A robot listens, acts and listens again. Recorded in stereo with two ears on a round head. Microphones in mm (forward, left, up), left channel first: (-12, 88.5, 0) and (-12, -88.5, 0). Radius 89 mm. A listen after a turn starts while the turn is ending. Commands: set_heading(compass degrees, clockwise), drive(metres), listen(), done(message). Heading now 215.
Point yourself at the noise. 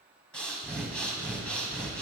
set_heading(185)
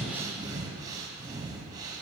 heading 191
set_heading(211)
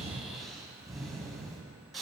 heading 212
done("Found it: breathing, straight ahead, under 1 m away.")